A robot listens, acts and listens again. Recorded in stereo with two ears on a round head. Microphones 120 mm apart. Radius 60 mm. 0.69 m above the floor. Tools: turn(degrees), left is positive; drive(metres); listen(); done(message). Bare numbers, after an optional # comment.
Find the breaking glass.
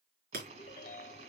turn(-90)
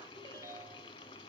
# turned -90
done("Facing where the breaking glass came from. I can't hear it now.")